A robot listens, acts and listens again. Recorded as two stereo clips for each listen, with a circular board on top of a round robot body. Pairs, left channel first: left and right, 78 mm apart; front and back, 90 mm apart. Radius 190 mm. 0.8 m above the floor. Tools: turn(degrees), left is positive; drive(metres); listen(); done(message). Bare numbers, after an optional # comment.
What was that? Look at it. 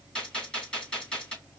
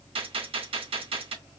# The gunshot: 170° left.
turn(170)
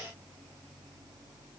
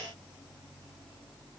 done("Facing where the gunshot came from. I can't hear it now.")